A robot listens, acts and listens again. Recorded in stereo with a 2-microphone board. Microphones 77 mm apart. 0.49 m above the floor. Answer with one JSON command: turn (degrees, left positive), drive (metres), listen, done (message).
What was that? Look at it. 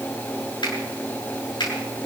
{"turn": 90}
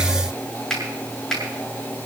{"done": "Found it: a finger snap, straight ahead."}